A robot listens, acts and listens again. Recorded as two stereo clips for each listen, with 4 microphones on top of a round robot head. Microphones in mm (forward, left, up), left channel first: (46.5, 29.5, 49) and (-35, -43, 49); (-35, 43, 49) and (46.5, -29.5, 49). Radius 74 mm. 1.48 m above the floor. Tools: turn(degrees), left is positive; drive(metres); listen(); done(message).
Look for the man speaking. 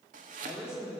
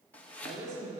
turn(degrees=-55)
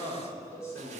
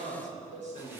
turn(degrees=-25)
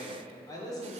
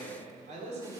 turn(degrees=-20)
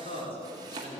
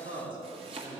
done("Facing the man speaking.")